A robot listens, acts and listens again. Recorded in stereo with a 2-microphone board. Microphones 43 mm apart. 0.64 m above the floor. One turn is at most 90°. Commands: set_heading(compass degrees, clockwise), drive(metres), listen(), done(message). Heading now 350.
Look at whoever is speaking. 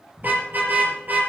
listen()
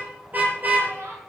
set_heading(80)
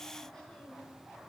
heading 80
listen()
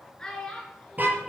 set_heading(65)
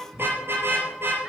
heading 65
listen()
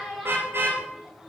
done("Facing the child speaking, over 4 m away.")